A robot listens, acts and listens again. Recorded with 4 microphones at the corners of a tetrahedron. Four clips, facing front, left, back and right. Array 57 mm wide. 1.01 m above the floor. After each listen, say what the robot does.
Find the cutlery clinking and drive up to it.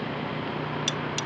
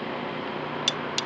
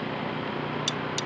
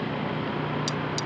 Turn 75° left.
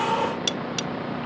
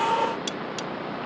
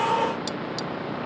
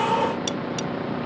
Drive 1.0 m forward.
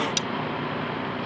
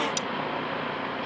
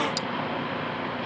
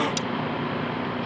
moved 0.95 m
Drive 1.0 m forward.
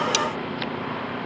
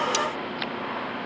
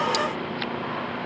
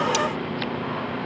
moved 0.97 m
Drive 1.0 m forward.
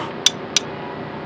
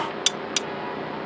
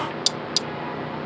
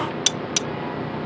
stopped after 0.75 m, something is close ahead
Arrived at the cutlery clinking, straight ahead.